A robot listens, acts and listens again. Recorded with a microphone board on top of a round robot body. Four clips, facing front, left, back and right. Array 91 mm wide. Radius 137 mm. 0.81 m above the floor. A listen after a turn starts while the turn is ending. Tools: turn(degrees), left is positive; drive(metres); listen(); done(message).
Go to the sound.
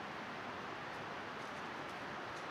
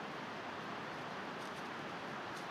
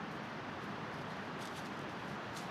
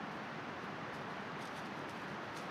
listen()
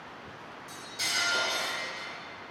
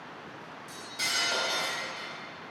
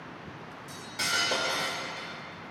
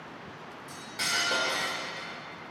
turn(degrees=-140)
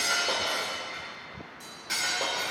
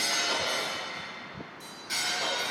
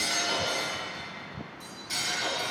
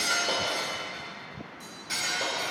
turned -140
drive(metres=1.0)
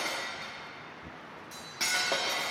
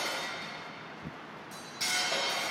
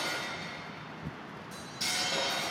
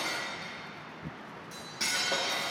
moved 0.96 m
drive(metres=1.0)
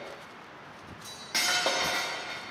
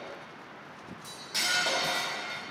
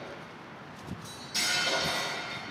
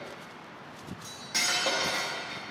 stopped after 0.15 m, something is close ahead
turn(degrees=-10)
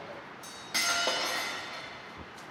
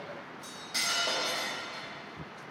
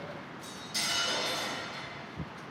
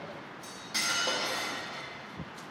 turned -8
done("Arrived at the cutlery clinking, straight ahead.")